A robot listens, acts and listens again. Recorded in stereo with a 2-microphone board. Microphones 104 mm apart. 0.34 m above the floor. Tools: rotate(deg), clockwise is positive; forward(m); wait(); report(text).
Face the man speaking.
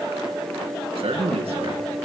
rotate(75)
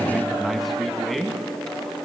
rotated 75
report("Found it: a man speaking, straight ahead.")